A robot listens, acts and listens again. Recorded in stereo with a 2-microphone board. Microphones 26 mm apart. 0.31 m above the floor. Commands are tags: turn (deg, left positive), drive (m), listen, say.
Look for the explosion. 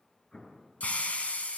<turn deg="35"/>
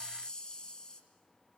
<listen/>
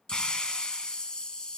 <say>I heard an explosion, but can't make it out now. It was about straight ahead or 110° left.</say>